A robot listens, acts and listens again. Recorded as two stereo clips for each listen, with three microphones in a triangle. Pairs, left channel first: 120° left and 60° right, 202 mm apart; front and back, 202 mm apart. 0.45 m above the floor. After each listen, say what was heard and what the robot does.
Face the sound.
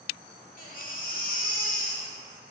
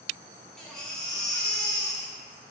The baby crying: 85° left. Turn 85° left.
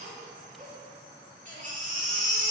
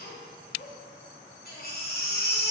The baby crying is now 20° right. Turn 20° right.
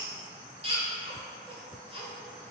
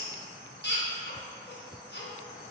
Found it: a baby crying, straight ahead, 1 to 2 m away.